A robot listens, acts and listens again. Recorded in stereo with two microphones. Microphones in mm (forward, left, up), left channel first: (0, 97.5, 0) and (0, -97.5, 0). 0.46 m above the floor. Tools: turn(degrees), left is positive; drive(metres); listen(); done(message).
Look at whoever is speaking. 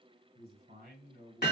turn(degrees=-50)
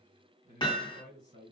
turn(degrees=-65)
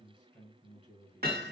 turn(degrees=25)
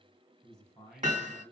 done("Found it: a man speaking, straight ahead.")